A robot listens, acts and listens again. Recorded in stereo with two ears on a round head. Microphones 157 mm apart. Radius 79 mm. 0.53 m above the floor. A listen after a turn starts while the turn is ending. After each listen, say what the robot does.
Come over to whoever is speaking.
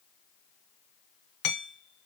Keep listening.
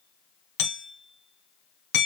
Keep listening.
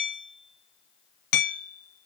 I can't make out anyone speaking to turn to.